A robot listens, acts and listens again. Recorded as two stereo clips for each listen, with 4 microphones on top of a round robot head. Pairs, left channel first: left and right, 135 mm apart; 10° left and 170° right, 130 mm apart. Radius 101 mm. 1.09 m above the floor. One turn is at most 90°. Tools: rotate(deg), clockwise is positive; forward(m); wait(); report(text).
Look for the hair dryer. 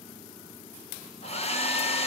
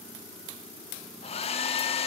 rotate(-50)
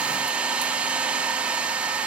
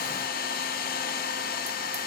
rotate(10)
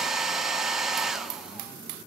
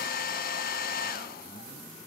report("Facing the hair dryer.")